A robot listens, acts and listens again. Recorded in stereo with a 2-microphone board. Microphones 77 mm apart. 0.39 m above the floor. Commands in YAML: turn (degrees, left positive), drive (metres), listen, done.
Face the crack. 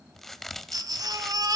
turn: 30
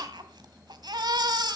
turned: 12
listen: true
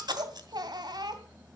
done: "I heard a crack, but can't make it out now. It was about 10° right or 165° left."